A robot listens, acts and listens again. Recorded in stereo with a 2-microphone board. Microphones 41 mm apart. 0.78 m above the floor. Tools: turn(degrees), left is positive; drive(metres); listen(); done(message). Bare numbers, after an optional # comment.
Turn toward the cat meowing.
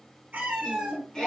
# The cat meowing: about 35° right or 145° right.
turn(-35)
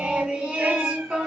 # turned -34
listen()
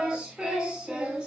listen()
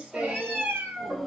# So it is at 110° right.
turn(-110)
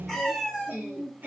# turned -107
done("Found it: a cat meowing, straight ahead, 2 to 4 m away.")